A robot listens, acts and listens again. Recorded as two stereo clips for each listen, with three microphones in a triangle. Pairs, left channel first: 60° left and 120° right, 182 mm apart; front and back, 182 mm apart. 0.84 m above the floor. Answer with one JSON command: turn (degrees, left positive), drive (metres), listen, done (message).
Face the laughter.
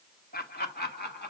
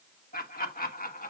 {"turn": 35}
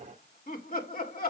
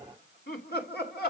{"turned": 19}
{"turn": 25}
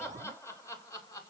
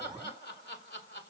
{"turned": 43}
{"turn": -15}
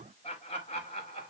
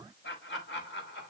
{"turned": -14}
{"done": "Found it: laughter, straight ahead."}